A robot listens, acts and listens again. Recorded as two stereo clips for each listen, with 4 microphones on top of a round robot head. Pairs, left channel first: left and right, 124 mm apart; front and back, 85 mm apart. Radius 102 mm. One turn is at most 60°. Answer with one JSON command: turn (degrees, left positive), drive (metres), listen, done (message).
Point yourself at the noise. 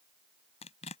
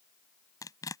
{"turn": 45}
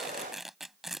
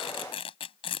{"done": "Found it: tearing paper, straight ahead."}